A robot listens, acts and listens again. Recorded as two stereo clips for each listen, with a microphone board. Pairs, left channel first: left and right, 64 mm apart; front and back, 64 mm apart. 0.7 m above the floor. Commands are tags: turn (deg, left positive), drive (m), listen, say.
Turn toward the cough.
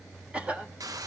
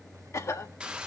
<turn deg="-20"/>
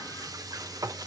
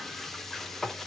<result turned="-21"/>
<listen/>
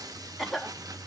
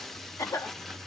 <say>Facing the cough, 1 to 2 m away.</say>